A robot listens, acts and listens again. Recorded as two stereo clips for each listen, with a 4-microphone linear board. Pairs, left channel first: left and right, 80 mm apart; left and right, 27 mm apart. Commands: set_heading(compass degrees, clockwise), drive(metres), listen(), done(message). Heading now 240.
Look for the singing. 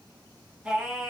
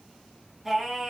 set_heading(270)
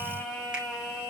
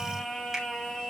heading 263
set_heading(233)
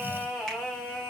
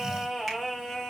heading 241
set_heading(226)
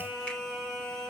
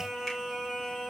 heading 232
set_heading(222)
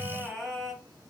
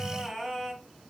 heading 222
done("Found it: singing, straight ahead.")